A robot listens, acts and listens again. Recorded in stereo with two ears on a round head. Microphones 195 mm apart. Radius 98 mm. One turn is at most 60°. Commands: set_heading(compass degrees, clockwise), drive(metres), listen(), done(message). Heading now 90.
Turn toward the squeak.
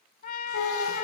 set_heading(30)
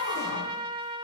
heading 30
listen()
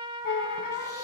set_heading(335)
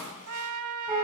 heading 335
set_heading(345)
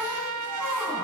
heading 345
done("Found it: a squeak, straight ahead, 2 to 4 m away.")